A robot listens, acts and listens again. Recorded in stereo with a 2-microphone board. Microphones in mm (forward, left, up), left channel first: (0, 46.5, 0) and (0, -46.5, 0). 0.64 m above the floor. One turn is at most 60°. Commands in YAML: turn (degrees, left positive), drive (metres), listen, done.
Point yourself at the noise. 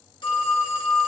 turn: 55
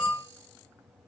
turn: 60
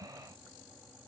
listen: true
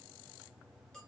listen: true
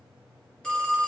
turn: 10
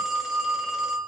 done: "Found it: a phone ringing, straight ahead."